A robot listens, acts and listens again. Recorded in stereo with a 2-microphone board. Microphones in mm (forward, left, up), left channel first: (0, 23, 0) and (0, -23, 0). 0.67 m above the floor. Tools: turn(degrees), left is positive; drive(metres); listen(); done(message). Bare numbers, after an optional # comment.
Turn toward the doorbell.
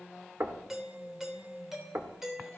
turn(-30)
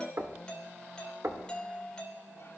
# So it is at 20° left.
turn(20)
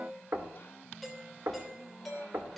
done("Found it: a doorbell, straight ahead, 2 to 4 m away.")